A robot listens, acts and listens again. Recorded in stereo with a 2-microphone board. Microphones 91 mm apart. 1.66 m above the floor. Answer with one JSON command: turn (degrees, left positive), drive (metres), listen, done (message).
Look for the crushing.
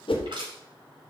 {"turn": -65}
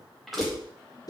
{"done": "Found it: crushing, straight ahead."}